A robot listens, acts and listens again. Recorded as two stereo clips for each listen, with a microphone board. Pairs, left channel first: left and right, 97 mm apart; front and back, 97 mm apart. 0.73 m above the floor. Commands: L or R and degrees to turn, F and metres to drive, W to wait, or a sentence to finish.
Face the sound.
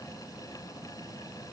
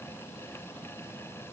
W
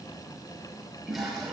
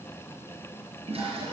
R175
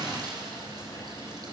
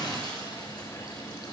R45
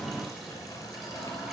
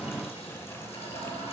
Facing the toilet flushing, 2 to 4 m away.